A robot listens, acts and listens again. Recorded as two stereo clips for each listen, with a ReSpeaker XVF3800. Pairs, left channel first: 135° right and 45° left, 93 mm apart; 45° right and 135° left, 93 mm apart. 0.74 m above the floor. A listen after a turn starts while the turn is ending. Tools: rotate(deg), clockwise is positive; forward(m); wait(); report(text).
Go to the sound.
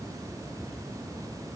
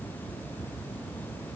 wait()
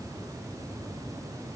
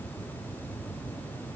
wait()
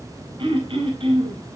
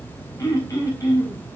rotate(-10)
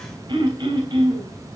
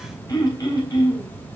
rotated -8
forward(1.0)
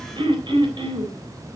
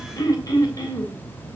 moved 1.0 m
forward(1.0)
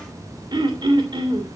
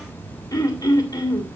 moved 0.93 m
forward(1.0)
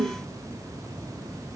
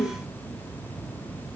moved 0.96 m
forward(1.0)
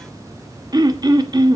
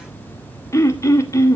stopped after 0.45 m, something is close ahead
rotate(-10)
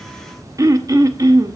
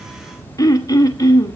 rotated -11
report("Arrived at the throat clearing, straight ahead.")